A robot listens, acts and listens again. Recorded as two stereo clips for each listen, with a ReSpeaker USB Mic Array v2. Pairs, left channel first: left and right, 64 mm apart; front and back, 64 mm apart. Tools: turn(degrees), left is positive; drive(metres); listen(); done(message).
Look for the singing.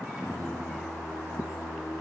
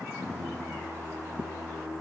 turn(degrees=-165)
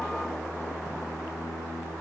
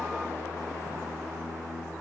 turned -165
turn(degrees=60)
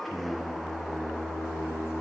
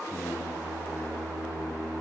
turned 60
done("Found it: singing, straight ahead.")